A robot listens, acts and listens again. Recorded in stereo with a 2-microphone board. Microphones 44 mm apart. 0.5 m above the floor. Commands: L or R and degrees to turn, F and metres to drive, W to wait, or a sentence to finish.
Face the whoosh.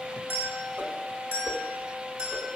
R45
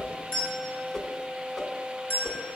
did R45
Found it: a whoosh, straight ahead, 1 to 2 m away.